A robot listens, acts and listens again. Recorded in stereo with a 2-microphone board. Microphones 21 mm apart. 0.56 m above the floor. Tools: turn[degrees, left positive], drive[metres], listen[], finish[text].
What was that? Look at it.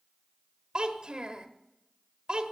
Thought: The child speaking: about 45° right or 135° right.
Action: turn[-45]
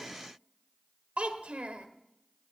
Thought: So it is at 85° right.
Action: turn[-85]
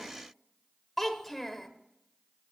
Thought: The child speaking is now 10° left.
Action: turn[10]
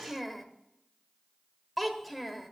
Action: finish[Facing the child speaking.]